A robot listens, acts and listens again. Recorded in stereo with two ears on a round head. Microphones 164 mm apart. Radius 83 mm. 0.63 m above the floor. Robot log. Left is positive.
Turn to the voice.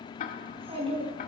note: The child speaking: about 35° right or 145° right.
cmd yaw -35
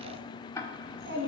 note: So it is at 110° right.
cmd yaw -110
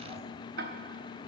cmd idle
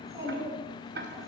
note: The child speaking is now 20° right.
cmd yaw -20
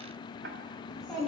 end: Facing the child speaking.